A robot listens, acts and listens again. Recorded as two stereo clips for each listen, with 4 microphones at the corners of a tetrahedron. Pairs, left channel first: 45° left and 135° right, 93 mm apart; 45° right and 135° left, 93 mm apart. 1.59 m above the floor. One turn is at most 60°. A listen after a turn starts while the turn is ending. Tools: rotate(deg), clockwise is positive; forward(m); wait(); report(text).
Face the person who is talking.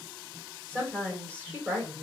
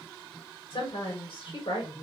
rotate(60)
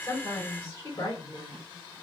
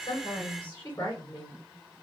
rotate(10)
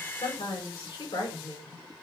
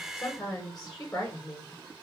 report("Facing the woman speaking.")